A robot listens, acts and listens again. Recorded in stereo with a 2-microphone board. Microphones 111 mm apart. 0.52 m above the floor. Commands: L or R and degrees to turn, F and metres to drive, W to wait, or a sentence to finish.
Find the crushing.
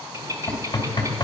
W
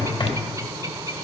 W
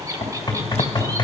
I can't make out crushing, only knocking and a bird.